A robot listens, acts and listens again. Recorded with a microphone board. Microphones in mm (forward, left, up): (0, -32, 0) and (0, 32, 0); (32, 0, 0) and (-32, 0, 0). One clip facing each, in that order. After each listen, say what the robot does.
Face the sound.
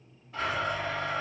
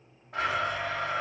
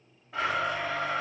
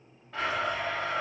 Turn 80° left.
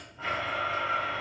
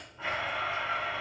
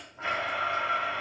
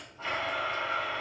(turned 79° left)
Found it: a blender, straight ahead.